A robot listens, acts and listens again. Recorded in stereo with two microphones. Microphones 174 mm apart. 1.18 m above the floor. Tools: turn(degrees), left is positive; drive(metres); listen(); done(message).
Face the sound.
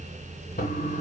turn(degrees=55)
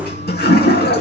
turn(degrees=70)
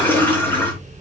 turn(degrees=10)
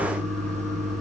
done("Found it: a toilet flushing, straight ahead, 2 to 4 m away.")